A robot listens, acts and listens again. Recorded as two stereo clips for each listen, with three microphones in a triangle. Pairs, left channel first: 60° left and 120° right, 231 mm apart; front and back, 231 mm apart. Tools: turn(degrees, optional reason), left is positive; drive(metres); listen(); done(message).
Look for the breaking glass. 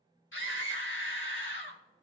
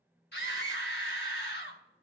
listen()
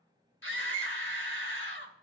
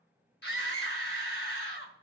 listen()
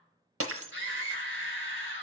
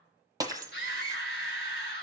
turn(degrees=-110, reason="The breaking glass: 110° right.")
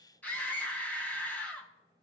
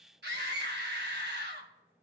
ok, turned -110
done("I heard breaking glass from this way, but can't make it out now.")